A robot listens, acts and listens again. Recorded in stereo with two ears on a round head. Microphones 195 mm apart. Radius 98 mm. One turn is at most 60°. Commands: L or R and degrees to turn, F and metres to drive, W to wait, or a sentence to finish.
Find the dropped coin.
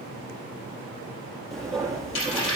L60
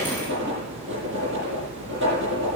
W
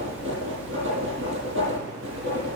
I heard a dropped coin, but can't make it out now. It was about straight ahead or 60° left.